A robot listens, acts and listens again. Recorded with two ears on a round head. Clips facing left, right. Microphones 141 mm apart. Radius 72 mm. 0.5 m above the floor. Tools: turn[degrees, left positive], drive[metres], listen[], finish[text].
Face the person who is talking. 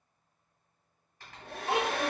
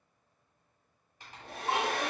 Thought: The child speaking: about 60° left or 120° left.
Action: turn[60]
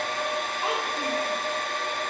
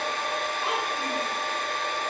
Action: listen[]
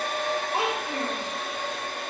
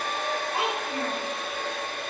Thought: So it is at 35° left.
Action: turn[35]
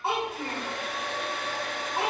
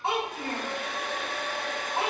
Action: finish[Facing the child speaking.]